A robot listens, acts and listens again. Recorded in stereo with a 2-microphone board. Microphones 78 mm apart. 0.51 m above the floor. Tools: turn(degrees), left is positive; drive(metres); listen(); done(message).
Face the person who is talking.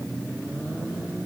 listen()
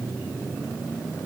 listen()
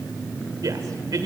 turn(degrees=-55)
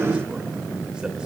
listen()
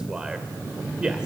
turn(degrees=-10)
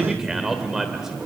done("Facing the man speaking, 1 to 2 m away.")